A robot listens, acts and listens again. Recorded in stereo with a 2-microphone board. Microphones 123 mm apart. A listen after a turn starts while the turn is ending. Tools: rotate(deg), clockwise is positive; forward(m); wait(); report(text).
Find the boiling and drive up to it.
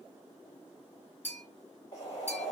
rotate(-30)
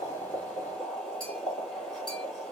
forward(1.0)
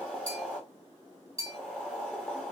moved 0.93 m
rotate(-10)
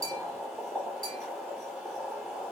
forward(1.0)
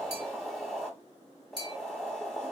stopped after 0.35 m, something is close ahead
report("Arrived at the boiling, straight ahead.")